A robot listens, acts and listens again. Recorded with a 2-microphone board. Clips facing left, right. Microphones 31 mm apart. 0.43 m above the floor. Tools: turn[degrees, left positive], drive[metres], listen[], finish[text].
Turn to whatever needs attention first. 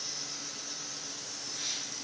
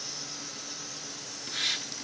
Action: listen[]
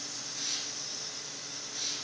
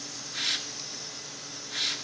Action: listen[]
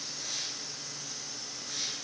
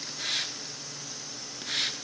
Action: finish[I can't make out anything urgent to turn to.]